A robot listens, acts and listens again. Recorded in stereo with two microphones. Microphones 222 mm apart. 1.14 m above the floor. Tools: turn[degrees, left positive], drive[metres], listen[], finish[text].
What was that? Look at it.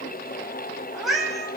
Action: turn[30]
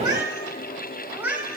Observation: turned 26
Action: turn[-30]
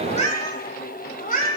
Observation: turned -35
Thought: So it is at 45° left.
Action: turn[45]
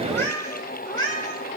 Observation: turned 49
Thought: The cat meowing is now 20° left.
Action: turn[20]
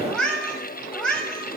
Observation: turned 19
Action: finish[Facing the cat meowing.]